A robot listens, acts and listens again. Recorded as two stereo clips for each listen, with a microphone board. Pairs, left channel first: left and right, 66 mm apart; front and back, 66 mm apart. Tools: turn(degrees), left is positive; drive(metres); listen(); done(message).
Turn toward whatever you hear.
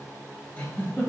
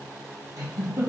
turn(degrees=155)
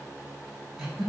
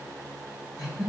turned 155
done("Facing the giggle.")